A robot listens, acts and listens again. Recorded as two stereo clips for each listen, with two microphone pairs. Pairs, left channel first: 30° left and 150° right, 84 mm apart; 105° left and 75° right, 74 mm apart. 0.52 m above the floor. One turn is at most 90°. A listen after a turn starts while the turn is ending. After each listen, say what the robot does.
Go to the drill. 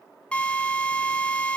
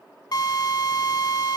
Turn 90° left.
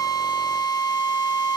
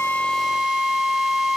Turn 10° left.
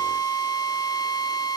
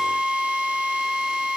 Drive 1.0 m forward.
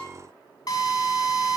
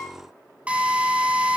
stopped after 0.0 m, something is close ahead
Something is in my way. I am facing the drill but have not reached it.